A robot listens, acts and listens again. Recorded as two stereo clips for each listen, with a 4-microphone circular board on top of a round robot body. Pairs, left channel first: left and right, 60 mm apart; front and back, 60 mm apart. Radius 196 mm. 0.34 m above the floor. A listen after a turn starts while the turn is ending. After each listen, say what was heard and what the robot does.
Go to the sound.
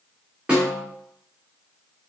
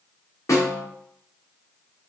The snare drum: 20° right. Turn 20° right.
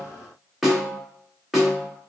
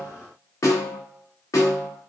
Drive 1.0 m forward.
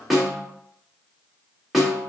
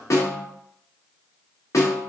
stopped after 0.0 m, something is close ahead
Blocked. The snare drum is further on, straight ahead.